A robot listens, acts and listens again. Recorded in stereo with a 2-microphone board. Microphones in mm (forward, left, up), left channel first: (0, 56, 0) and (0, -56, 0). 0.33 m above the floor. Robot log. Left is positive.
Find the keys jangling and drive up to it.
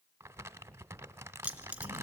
cmd yaw -30
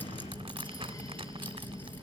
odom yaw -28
cmd idle
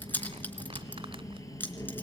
note: So it is at 15° left.
cmd yaw +15
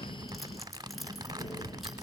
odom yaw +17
cmd idle
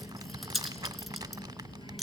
cmd fwd 1.0
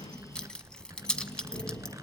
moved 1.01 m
note: The keys jangling is now 10° left.
cmd yaw +10
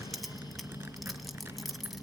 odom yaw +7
cmd fwd 1.0
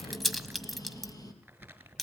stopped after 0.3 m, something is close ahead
end: I am next to the keys jangling.